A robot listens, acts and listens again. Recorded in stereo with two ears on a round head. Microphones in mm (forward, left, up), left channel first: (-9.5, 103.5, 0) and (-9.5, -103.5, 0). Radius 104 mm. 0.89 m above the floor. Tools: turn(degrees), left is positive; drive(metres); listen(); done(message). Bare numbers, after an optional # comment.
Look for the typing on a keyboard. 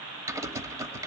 turn(-30)
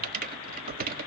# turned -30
# So it is at 135° right.
turn(-135)
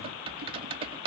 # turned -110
# The typing on a keyboard is now 25° right.
turn(-25)
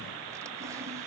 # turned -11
# Nothing new. It was at 15° right.
turn(-15)
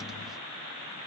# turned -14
listen()
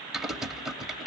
done("Found it: typing on a keyboard, straight ahead.")